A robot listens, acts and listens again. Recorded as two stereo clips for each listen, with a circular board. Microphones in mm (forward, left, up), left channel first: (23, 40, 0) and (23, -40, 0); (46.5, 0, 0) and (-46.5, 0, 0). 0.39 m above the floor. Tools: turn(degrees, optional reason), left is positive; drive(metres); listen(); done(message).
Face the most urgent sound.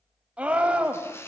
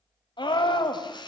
turn(degrees=-15, reason="The scream: 15° right.")
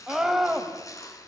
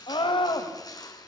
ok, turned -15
done("Facing the scream, 1 to 2 m away.")